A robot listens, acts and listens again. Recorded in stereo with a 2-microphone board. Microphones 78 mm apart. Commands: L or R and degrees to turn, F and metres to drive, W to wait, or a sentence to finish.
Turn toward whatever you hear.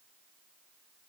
W
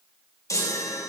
L45
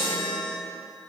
L90
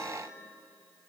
W
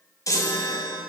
L45
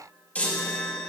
L15
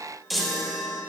Found it: a chime, straight ahead.